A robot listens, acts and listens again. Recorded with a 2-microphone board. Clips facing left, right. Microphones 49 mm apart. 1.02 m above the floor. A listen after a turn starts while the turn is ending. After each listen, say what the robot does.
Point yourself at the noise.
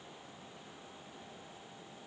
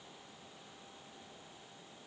Keep listening.
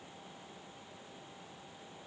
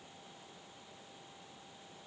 Keep listening.
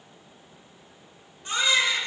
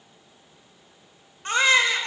Turn 55° right.
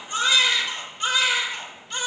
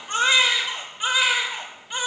Turn 20° right.
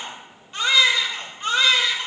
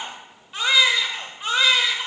Facing the baby crying.